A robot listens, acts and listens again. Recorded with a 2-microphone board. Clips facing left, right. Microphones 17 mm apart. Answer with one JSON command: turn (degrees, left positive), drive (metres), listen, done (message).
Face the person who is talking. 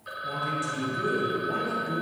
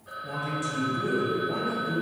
{"turn": 25}
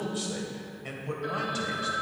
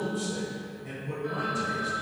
{"turn": 115}
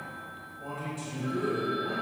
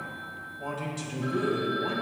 {"turn": -50}
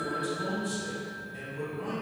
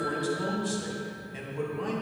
{"turn": -30}
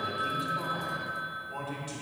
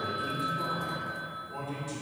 {"turn": 30}
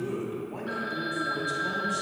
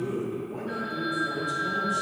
{"turn": 25}
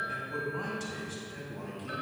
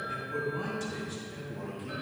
{"turn": 10}
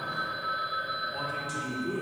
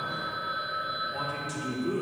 {"done": "Facing the man speaking."}